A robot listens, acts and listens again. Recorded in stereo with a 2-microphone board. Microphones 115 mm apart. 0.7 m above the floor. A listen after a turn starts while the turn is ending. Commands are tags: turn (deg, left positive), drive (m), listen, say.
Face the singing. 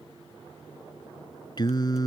<turn deg="35"/>
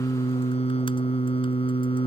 <turn deg="120"/>
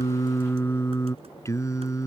<turn deg="30"/>
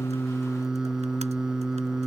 <say>Found it: singing, straight ahead.</say>